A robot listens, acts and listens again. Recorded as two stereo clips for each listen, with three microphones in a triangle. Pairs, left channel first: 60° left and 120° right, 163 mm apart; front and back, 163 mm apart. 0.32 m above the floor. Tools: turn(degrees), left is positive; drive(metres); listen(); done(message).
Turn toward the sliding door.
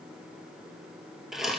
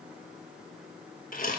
listen()
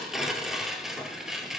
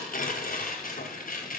listen()
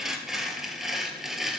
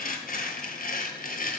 done("I can't make out a sliding door, only tearing paper.")